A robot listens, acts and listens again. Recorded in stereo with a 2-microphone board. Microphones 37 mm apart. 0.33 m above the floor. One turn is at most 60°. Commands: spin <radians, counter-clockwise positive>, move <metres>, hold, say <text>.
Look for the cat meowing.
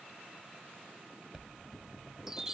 hold
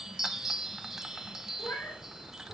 spin 1.05
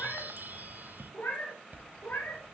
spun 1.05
spin 1.05
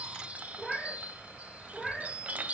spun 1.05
say Found it: a cat meowing, straight ahead.